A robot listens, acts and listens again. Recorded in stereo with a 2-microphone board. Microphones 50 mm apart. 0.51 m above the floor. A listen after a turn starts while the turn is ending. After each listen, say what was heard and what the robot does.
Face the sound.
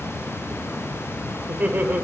The laughter: about 35° right or 145° right. Turn 35° right.
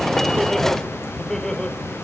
So it is at 15° left. Turn 15° left.
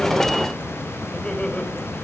The laughter is now 20° left. Turn 20° left.
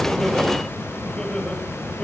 The laughter is now 15° left. Turn 15° left.
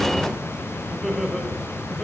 Found it: laughter, straight ahead, 2 to 4 m away.